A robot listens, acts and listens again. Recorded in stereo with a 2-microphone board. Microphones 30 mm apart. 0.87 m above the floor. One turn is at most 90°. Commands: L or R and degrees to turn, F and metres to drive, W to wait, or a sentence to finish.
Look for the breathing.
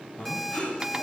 L45
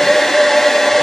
W
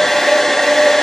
W
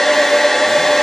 I heard breathing, but can't make it out now. It was about straight ahead or 90° left.